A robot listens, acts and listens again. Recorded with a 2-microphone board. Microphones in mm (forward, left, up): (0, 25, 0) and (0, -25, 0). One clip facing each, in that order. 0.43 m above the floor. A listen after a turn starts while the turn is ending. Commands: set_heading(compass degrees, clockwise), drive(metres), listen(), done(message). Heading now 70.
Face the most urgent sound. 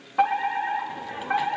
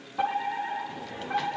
set_heading(5)
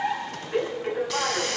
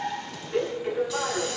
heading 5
set_heading(330)
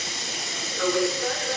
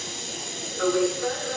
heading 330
set_heading(305)
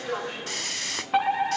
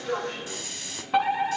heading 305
set_heading(290)
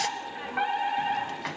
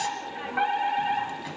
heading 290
done("Facing the fire alarm.")